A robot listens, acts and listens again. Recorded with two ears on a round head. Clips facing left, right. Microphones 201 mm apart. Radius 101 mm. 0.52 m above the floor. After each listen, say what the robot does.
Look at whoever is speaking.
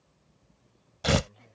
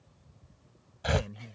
Turn 35° right.
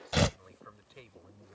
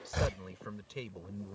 Turn 105° right.
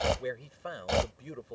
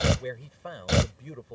Facing the man speaking.